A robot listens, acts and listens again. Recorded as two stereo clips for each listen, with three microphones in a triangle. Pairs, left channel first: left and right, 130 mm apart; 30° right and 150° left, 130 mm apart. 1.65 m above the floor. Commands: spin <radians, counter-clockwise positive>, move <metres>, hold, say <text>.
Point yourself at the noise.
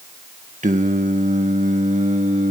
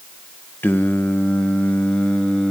spin -1.92
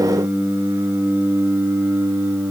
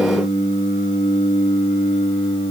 spin -0.35
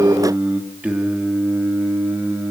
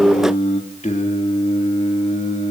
spin -0.26
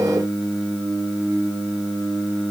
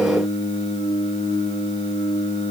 say Found it: singing, straight ahead.